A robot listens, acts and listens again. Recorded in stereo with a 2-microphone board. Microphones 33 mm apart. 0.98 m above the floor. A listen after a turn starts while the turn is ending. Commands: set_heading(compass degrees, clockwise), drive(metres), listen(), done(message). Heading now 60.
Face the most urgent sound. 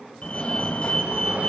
set_heading(20)
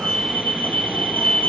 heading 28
set_heading(288)
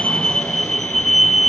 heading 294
done("Found it: a fire alarm, straight ahead, 2 to 4 m away.")